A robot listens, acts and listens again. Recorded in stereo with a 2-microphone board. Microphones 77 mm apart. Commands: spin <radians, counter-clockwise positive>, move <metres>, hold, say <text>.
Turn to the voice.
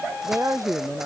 spin -0.79
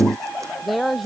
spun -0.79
say Found it: a woman speaking, straight ahead.